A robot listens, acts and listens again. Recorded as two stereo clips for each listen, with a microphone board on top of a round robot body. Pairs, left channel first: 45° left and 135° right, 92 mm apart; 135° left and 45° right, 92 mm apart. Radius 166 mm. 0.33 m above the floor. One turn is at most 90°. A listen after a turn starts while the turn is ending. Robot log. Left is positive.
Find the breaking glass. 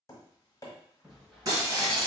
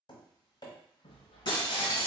note: The breaking glass: 170° left.
cmd yaw +90
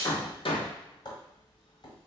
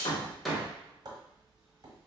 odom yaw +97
note: Nothing new. It was at 75° left.
cmd yaw +75
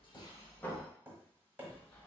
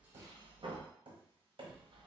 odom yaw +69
end: Facing where the breaking glass came from. I can't hear it now.